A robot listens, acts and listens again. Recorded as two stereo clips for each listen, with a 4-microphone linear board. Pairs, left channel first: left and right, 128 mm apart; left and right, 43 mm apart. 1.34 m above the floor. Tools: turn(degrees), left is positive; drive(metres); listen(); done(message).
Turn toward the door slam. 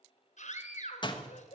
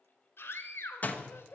turn(degrees=35)
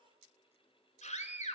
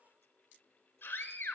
listen()
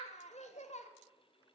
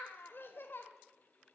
done("I heard a door slam, but can't make it out now. It was about straight ahead or 110° left.")